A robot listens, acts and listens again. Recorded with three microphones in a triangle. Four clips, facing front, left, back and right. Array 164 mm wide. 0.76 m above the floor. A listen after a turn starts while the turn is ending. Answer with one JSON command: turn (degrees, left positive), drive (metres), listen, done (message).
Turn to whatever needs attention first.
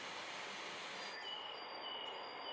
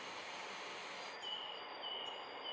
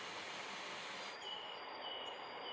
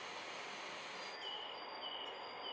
{"listen": true}
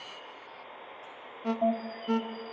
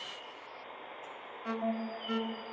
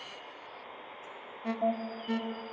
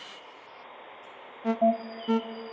{"turn": -75}
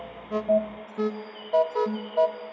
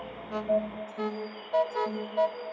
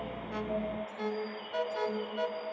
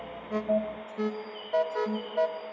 {"done": "Found it: an alarm, straight ahead."}